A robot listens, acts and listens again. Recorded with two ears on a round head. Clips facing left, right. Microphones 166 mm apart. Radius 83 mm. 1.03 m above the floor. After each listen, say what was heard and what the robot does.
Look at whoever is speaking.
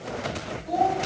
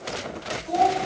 The child speaking: about 25° left or 155° left. Turn 25° left.
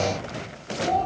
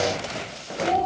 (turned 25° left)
Keep listening.
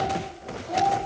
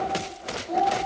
Facing the child speaking.